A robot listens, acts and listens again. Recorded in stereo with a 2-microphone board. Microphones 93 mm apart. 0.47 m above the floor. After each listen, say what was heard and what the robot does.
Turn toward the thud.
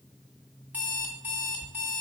The thud: about 65° left or 115° left. Turn 65° left.
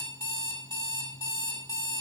Keep listening.
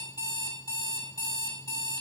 I heard a thud, but can't make it out now. It was about straight ahead or 50° left.